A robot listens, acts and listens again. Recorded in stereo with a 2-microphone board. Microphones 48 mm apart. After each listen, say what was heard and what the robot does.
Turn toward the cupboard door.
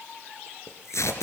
Keep listening.
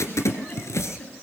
Keep listening.
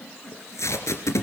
I can't make out a cupboard door, only tape being pulled and a giggle.